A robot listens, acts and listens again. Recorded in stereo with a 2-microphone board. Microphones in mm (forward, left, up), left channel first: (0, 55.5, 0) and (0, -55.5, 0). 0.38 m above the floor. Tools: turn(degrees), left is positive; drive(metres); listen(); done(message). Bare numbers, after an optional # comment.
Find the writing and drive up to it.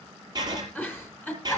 # The writing: about 40° right or 140° right.
turn(-40)
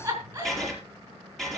drive(1.0)
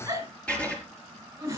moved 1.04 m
# The writing is now 10° left.
turn(10)
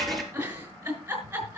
drive(1.0)
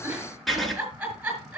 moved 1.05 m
drive(1.0)
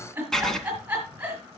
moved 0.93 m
drive(1.0)
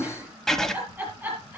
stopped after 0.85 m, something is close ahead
done("I am next to the writing.")